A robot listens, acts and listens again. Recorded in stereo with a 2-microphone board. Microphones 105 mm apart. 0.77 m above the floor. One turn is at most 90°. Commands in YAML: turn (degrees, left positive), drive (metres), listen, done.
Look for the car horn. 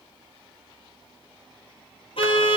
turn: 60
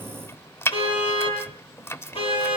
turn: 65
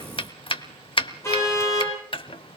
turn: 25
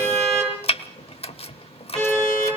done: "Facing the car horn, over 4 m away."